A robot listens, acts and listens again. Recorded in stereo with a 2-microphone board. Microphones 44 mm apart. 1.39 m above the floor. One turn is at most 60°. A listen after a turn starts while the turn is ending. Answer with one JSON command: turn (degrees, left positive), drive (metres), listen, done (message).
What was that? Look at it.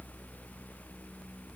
{"listen": true}
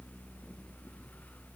{"listen": true}
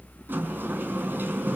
{"turn": -55}
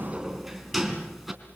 {"done": "Facing the sliding door, 2 to 4 m away."}